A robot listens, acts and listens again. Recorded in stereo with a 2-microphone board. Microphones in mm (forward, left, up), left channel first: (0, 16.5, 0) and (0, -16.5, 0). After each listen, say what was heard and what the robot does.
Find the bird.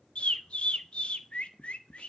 The bird: about 35° left or 145° left. Turn 35° left.
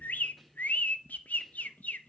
So it is at 105° left. Turn 105° left.
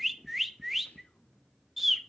Facing the bird.